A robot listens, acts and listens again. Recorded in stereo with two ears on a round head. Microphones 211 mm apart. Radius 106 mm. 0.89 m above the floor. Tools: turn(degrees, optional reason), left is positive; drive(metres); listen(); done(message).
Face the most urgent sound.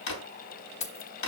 listen()
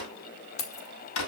listen()
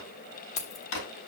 done("I can't make out anything urgent to turn to.")